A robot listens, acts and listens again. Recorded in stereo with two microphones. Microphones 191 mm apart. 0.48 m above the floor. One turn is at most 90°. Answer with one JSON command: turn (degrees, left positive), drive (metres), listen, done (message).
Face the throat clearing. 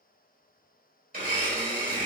{"listen": true}
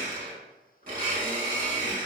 {"listen": true}
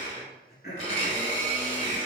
{"turn": 60}
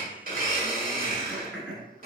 {"done": "Facing the throat clearing, 1 to 2 m away."}